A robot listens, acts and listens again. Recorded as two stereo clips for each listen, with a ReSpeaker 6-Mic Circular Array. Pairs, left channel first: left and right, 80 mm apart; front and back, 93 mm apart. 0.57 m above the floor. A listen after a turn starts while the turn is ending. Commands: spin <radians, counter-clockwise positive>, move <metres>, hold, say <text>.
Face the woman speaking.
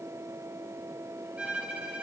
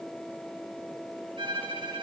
hold
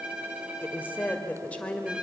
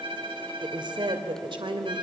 spin 2.88
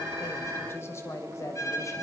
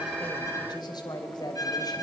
spin 0.70
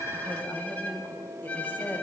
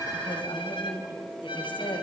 spin 0.44
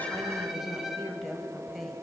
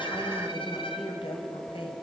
say Facing the woman speaking.